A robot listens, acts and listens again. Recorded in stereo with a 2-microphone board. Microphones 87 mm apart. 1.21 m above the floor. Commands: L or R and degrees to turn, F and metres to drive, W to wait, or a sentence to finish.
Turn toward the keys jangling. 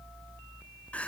W
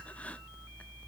W
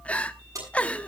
R40
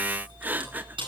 R105
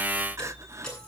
L10
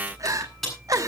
Found it: keys jangling, straight ahead, over 4 m away.